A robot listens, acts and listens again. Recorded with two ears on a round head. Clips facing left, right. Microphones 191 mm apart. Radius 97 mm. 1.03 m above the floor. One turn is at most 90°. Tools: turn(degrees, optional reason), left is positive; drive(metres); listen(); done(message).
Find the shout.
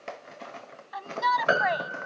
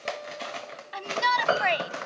turn(degrees=-35, reason="The shout: about 35° right or 145° right.")
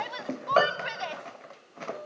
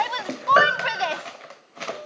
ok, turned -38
turn(degrees=-90, reason="So it is at 105° right.")
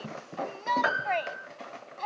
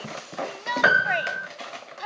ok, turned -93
turn(degrees=-15, reason="The shout is now 15° right.")
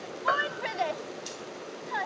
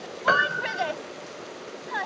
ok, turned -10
done("Found it: a shout, straight ahead.")